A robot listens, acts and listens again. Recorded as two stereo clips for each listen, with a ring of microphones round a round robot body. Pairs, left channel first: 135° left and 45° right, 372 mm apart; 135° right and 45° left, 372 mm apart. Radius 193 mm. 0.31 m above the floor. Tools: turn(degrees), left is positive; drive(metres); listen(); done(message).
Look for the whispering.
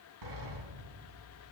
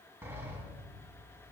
listen()
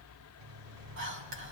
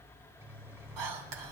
turn(degrees=10)
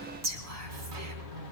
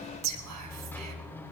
done("Facing the whispering, 2 to 4 m away.")